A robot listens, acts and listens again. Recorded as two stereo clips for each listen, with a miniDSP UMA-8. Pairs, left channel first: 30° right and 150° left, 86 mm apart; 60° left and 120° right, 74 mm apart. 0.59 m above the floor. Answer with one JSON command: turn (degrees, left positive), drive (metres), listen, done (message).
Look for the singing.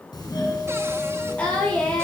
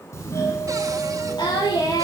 {"turn": 45}
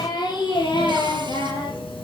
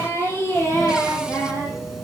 {"done": "Facing the singing."}